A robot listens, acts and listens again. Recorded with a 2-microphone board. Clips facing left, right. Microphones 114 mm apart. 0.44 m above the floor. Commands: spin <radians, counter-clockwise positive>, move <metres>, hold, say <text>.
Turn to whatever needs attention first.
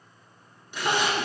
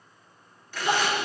spin 1.22
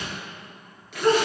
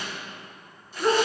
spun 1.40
spin -0.17
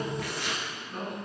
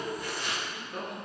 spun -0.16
say Found it: crying, straight ahead.